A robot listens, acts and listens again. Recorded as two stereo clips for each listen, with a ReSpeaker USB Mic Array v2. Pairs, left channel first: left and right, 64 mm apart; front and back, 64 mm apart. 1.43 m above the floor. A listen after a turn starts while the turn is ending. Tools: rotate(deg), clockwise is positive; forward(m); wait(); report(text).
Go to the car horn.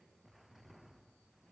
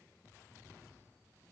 wait()
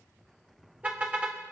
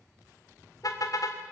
rotate(25)
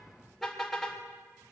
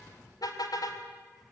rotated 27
forward(1.0)
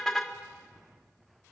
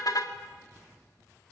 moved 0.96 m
forward(1.0)
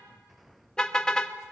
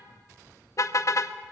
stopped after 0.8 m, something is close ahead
rotate(-15)
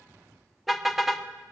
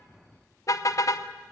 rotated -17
report("I am next to the car horn.")